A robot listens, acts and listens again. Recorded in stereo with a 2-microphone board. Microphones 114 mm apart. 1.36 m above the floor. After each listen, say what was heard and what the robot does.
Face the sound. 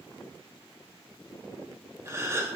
The gasp: about 30° right or 150° right. Turn 30° right.
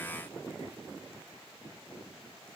Keep listening.
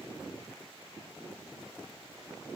I heard a gasp, but can't make it out now. It was about straight ahead or 120° right.